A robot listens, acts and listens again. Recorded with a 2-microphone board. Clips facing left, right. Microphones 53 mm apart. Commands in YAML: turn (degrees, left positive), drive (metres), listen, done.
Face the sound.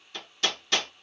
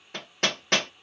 turn: -50
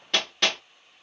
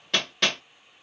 done: "Found it: hammering, straight ahead."